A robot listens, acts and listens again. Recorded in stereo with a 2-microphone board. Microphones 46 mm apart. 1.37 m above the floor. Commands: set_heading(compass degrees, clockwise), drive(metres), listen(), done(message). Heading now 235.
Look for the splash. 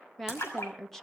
set_heading(145)
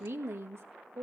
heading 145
done("I heard a splash from this way, but can't make it out now.")